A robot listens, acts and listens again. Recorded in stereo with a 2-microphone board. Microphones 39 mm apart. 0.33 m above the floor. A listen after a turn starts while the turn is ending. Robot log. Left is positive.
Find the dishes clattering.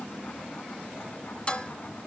note: The dishes clattering: about 25° left or 155° left.
cmd yaw +25
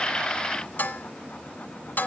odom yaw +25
note: So it is at 125° left.
cmd yaw +125
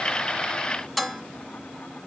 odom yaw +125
end: Facing the dishes clattering.